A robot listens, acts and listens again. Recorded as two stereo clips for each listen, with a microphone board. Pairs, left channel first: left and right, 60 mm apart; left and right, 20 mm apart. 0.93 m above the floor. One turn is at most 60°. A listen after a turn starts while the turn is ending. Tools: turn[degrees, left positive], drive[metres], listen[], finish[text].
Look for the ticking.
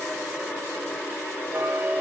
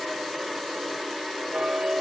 Thought: The ticking: about 40° right or 140° right.
Action: turn[-40]
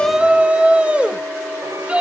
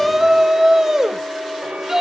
Thought: So it is at 95° right.
Action: turn[-60]
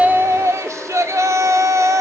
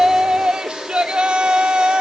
Thought: Nothing new. It was at 35° right.
Action: turn[-35]
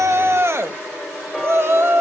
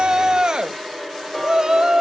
Action: finish[Found it: ticking, straight ahead.]